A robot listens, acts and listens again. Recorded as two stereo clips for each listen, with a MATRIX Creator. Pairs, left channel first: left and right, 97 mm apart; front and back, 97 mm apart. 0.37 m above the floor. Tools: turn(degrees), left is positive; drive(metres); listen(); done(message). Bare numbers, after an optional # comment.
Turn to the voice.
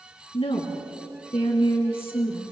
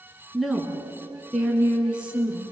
# The woman speaking: 105° left.
turn(105)
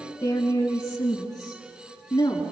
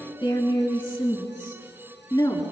# The woman speaking is now 45° left.
turn(45)
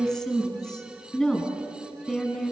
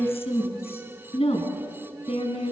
done("Facing the woman speaking, over 4 m away.")